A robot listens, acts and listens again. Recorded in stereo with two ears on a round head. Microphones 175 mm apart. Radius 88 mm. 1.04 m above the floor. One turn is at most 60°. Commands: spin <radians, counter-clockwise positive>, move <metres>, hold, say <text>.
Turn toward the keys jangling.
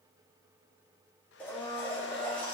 hold
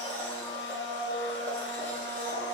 hold
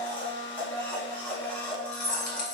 spin 1.05
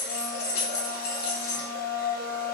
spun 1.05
spin 0.96
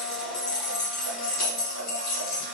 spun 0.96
say Facing the keys jangling.